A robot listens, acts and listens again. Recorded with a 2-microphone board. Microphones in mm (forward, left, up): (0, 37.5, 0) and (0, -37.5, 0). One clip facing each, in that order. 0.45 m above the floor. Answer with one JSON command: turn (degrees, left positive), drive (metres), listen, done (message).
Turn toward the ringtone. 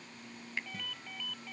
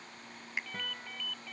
{"turn": 30}
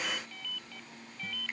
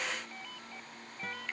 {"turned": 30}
{"turn": -25}
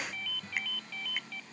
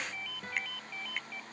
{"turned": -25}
{"turn": -15}
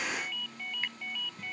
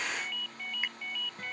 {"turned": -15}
{"done": "Facing the ringtone."}